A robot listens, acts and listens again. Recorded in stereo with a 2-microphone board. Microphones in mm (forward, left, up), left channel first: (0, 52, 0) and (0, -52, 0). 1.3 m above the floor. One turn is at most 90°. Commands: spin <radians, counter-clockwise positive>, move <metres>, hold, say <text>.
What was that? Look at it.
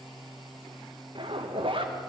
spin -0.96
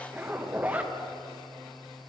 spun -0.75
spin -0.26
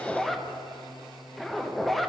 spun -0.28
say Facing the zipper, under 1 m away.